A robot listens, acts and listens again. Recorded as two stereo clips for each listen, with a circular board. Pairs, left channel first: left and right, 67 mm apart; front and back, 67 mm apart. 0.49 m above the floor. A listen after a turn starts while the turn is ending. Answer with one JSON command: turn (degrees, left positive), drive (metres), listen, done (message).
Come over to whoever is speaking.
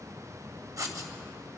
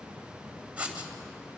{"listen": true}
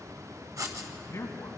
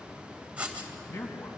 {"turn": 45}
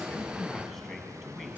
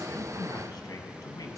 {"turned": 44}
{"drive": 1.0}
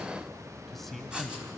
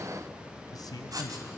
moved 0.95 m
{"drive": 1.0}
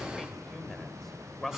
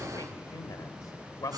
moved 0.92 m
{"drive": 1.0}
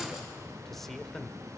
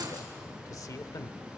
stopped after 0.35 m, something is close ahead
{"done": "I am next to the man speaking."}